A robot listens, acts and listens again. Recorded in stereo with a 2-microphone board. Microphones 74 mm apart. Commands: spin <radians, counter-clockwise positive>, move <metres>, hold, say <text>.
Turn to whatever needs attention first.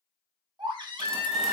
spin -1.13
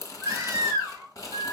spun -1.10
spin -0.61
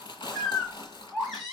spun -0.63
say Found it: a baby crying, straight ahead.